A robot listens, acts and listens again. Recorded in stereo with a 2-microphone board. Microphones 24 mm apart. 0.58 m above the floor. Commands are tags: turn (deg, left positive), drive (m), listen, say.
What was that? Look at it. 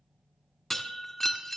<turn deg="30"/>
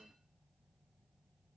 <listen/>
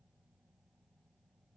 <say>I heard breaking glass, but can't make it out now. It was about 20° right or 140° left.</say>